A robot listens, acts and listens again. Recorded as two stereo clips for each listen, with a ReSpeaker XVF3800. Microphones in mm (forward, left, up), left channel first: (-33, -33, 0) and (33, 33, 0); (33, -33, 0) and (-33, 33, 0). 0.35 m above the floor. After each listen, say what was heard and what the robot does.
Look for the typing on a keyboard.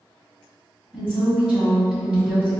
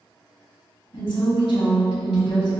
Keep listening.
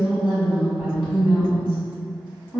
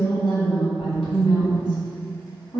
Keep listening.
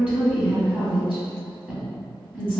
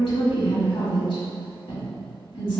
I can't make out typing on a keyboard to turn to.